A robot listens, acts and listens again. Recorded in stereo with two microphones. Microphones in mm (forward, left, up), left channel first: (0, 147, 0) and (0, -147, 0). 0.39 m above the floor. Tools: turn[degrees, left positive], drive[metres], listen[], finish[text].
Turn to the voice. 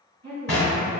Thought: The woman speaking: about 60° right or 120° right.
Action: turn[-60]
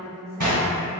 Thought: So it is at 35° right.
Action: turn[-35]
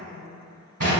Action: listen[]
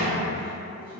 Action: finish[Facing the woman speaking, 1 to 2 m away.]